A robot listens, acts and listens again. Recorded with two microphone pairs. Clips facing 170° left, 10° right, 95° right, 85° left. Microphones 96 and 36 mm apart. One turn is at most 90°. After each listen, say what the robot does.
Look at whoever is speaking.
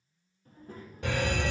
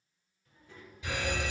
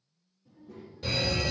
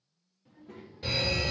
Turn 90° left.
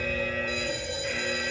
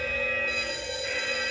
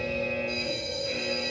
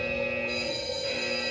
Turn 30° left.
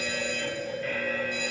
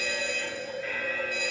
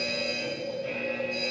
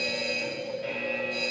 Keep listening.
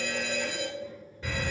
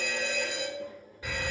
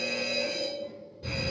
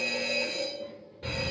Turn 30° left.
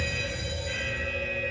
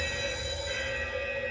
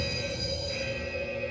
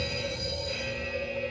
Keep listening.
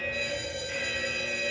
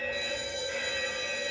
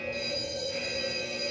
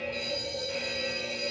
Keep listening.
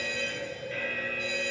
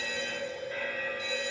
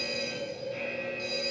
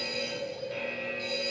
Facing where the child speaking came from. I can't hear it now.